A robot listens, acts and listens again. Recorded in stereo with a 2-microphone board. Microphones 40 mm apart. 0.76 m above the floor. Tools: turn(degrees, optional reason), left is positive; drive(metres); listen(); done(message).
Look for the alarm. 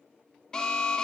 turn(degrees=15, reason="The alarm: about 15° left or 165° left.")
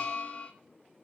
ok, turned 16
turn(degrees=150, reason="So it is at 150° left.")
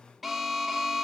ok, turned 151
done("Facing the alarm.")